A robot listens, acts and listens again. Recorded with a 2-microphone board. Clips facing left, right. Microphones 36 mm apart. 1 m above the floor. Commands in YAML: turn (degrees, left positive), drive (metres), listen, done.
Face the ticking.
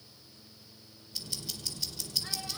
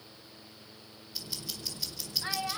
turn: -30
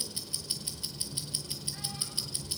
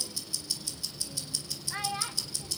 turn: 20
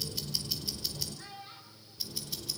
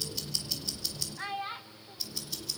done: "Found it: ticking, straight ahead, over 4 m away."